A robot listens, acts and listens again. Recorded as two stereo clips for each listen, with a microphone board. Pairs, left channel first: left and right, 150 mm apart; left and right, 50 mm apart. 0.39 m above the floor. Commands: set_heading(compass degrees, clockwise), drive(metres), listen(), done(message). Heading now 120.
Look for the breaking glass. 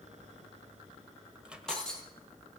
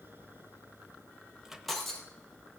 set_heading(90)
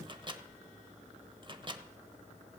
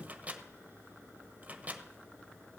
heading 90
listen()
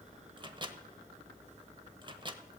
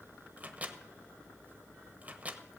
done("I heard breaking glass, but can't make it out now. It was about 25° right or 145° left.")